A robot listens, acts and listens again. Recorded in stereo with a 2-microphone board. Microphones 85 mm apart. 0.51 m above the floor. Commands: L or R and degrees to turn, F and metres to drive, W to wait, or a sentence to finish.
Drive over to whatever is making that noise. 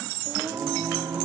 R50
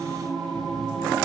R75
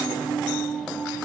R20
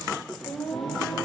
F1.0
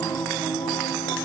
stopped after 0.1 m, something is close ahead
Something is in my way. I am facing the singing but have not reached it.